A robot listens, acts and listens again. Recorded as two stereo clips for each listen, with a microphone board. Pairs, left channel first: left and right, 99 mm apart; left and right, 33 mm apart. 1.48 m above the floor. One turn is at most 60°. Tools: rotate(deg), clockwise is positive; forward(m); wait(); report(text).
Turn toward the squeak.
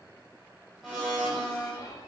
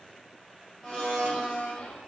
wait()
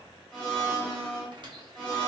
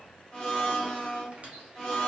rotate(50)
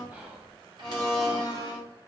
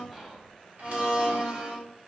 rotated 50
wait()
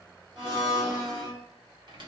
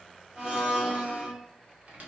rotate(60)
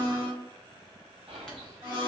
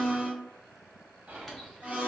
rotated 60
wait()
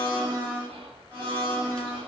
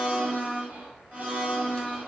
wait()
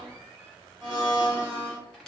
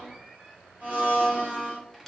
rotate(-10)
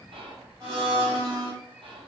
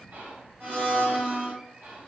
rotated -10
wait()
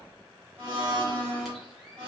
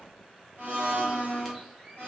wait()
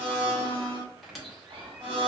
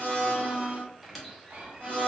report("Found it: a squeak, straight ahead, under 1 m away.")